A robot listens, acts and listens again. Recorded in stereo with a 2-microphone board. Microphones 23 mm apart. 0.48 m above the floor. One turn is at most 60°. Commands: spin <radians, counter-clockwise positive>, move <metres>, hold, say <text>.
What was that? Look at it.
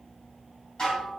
spin 0.52
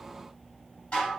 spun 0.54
spin 1.05
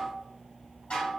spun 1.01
spin 1.05
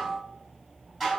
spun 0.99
say Found it: dishes clattering, straight ahead, 1 to 2 m away.